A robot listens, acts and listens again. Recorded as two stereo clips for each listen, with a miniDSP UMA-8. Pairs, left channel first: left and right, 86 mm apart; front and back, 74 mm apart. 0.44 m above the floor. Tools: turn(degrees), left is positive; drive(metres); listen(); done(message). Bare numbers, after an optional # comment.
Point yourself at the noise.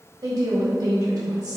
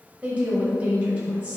# The woman speaking: 115° right.
turn(-115)
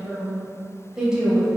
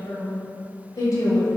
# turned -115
# The woman speaking is now 10° right.
turn(-10)
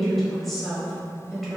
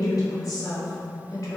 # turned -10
done("Facing the woman speaking, 1 to 2 m away.")